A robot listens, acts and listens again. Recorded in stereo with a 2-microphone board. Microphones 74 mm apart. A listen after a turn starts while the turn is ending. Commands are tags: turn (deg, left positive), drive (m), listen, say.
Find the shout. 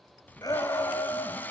<turn deg="60"/>
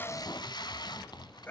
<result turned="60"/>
<turn deg="35"/>
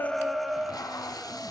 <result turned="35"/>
<say>Facing the shout, 2 to 4 m away.</say>